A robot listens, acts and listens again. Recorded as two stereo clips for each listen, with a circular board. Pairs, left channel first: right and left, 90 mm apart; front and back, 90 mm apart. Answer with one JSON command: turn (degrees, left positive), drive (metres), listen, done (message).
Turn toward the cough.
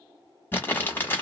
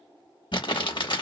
{"listen": true}
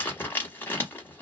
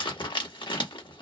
{"listen": true}
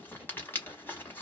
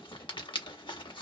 {"done": "I can't make out a cough, only crumpling."}